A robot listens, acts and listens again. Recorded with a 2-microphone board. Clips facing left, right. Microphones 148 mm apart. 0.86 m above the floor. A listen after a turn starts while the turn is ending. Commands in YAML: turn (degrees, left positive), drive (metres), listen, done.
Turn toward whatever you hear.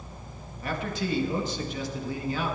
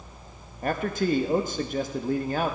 turn: -50
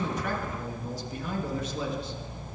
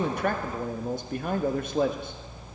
turn: -70
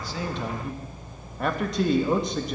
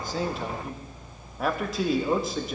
done: "Found it: a man speaking, straight ahead."